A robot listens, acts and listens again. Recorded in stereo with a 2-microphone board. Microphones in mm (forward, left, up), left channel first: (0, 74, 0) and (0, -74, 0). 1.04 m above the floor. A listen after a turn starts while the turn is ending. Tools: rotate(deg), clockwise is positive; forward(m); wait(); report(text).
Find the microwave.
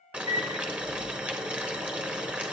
rotate(25)
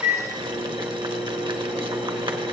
report("Facing the microwave.")